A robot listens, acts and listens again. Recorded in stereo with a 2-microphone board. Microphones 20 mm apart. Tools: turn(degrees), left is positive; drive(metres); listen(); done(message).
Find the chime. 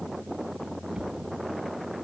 listen()
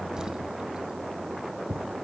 listen()
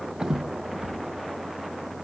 done("I can't make out a chime to turn to.")